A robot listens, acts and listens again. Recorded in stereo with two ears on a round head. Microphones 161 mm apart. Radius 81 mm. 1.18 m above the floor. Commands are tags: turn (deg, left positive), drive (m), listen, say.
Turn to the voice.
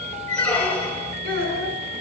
<turn deg="-55"/>
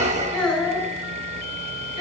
<say>Found it: a child speaking, straight ahead.</say>